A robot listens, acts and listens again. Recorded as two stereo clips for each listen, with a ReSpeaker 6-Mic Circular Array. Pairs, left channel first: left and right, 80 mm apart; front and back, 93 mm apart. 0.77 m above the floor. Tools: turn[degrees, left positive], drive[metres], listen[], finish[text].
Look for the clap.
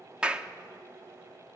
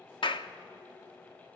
Thought: The clap: 15° right.
Action: turn[-15]
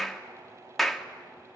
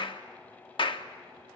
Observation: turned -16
Action: finish[Facing the clap, 1 to 2 m away.]